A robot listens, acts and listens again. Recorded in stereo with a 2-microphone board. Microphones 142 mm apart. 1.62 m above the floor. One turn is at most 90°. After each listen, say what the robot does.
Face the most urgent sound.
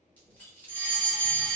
Turn 60° left.
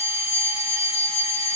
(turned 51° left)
Turn 45° left.
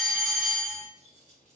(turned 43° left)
Found it: a fire alarm, straight ahead, 1 to 2 m away.